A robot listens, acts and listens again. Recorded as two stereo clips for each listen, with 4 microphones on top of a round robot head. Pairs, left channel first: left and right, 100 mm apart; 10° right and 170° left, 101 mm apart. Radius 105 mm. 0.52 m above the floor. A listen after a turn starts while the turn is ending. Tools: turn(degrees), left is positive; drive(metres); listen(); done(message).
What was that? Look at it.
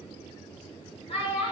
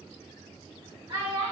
turn(degrees=120)
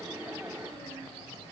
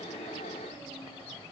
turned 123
listen()
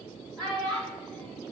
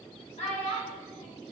done("Found it: a child speaking, straight ahead, over 4 m away.")